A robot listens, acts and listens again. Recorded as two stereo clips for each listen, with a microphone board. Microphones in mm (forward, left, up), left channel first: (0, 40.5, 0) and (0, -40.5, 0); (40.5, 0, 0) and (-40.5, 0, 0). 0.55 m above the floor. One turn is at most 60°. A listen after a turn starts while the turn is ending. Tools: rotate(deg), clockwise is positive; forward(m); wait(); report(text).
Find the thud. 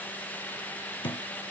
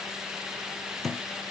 rotate(-60)
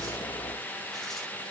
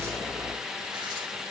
rotate(-30)
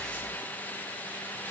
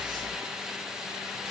report("Facing where the thud came from. I can't hear it now.")